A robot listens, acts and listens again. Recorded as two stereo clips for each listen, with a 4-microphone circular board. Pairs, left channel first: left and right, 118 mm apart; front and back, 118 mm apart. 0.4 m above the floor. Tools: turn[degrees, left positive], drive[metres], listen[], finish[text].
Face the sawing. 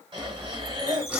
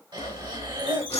Thought: The sawing: 15° right.
Action: turn[-15]
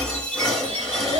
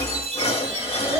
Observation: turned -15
Action: finish[Found it: sawing, straight ahead.]